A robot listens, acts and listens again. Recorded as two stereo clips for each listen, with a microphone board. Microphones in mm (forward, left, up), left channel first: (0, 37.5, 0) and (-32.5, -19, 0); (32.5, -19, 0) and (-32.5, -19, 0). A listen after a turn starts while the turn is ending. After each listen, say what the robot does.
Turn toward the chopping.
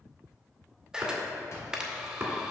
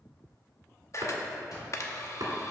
Turn 175° right.
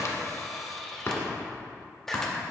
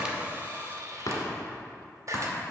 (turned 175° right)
Turn 15° left.
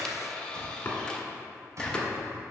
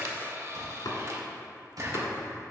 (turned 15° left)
Found it: chopping, straight ahead.